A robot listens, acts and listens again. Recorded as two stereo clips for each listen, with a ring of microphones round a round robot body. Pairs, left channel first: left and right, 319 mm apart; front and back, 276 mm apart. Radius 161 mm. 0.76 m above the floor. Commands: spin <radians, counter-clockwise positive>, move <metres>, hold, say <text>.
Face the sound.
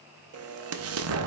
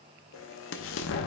spin -0.79
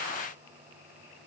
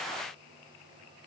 say Facing where the explosion came from. I can't hear it now.